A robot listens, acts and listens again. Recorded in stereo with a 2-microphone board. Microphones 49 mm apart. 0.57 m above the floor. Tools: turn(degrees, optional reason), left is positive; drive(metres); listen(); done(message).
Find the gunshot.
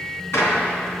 turn(degrees=90)
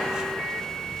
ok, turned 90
done("Facing where the gunshot came from. I can't hear it now.")